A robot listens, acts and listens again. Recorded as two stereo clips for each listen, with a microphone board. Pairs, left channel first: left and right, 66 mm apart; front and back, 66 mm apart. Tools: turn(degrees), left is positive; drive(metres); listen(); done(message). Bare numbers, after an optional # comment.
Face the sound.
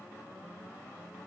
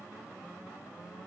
listen()
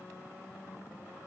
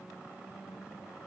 listen()
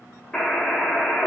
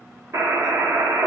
# The buzzer: 170° left.
turn(170)
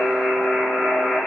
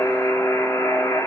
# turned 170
done("Facing the buzzer, 1 to 2 m away.")